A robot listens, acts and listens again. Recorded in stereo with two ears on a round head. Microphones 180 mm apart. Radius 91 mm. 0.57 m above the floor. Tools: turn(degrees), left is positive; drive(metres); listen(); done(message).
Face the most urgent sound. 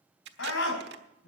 turn(degrees=70)
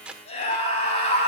turn(degrees=35)
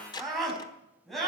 done("Found it: a scream, straight ahead, over 4 m away.")